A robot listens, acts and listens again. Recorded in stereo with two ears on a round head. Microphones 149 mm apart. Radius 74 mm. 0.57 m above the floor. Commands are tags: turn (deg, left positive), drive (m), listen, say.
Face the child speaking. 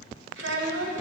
<turn deg="-90"/>
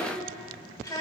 <turn deg="25"/>
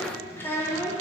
<turn deg="20"/>
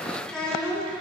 <turn deg="10"/>
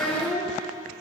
<say>Facing the child speaking, 2 to 4 m away.</say>